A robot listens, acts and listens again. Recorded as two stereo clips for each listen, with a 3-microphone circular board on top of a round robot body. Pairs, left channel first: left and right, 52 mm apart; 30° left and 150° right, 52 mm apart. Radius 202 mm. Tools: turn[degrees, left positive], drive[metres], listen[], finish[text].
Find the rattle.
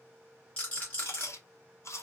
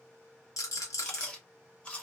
Thought: The rattle: 25° left.
Action: turn[25]
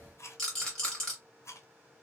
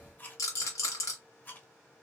Thought: The rattle is now 10° left.
Action: turn[10]
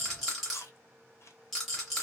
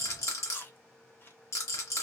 Action: finish[Found it: a rattle, straight ahead.]